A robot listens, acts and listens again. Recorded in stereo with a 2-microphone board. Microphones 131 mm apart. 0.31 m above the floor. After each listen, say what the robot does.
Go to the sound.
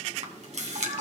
Turn 60° right.
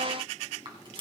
Turn 40° right.
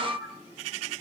Drive 1.0 m forward.
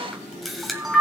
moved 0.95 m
Drive 1.0 m forward.
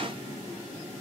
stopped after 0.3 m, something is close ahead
Keep listening.
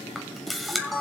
Arrived at the camera shutter, straight ahead.